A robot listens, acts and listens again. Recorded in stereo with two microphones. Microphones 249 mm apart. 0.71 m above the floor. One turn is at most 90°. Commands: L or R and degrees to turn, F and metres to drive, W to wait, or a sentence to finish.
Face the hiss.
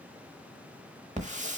R30
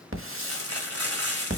R90
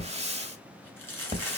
R25
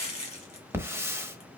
R10
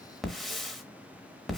Found it: a hiss, straight ahead.